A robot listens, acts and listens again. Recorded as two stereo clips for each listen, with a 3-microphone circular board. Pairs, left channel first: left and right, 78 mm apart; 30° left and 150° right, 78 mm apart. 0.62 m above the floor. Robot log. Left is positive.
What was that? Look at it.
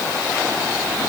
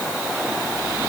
cmd idle
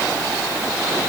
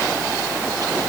cmd idle
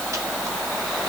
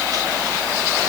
end: I can't make out anything to turn to.